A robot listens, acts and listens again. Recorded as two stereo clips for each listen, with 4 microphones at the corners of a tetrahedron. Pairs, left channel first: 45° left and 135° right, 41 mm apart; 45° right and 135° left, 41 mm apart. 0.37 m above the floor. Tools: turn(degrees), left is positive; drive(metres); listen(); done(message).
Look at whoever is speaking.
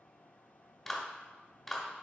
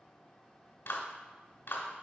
listen()
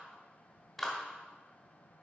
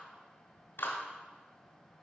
listen()
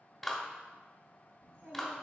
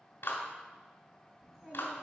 turn(degrees=-145)
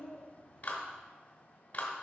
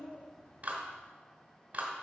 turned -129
turn(degrees=-15)
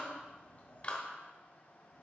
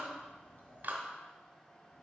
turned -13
done("Found it: a child speaking, straight ahead.")